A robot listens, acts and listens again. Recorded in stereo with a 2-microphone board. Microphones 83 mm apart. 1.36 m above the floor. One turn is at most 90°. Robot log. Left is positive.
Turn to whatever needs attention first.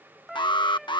note: The alarm: about 70° left or 110° left.
cmd yaw +70
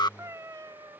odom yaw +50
note: So it is at 60° left.
cmd yaw +60
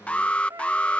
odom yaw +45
note: The alarm is now 15° left.
cmd yaw +15
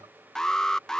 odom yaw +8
end: Found it: an alarm, straight ahead.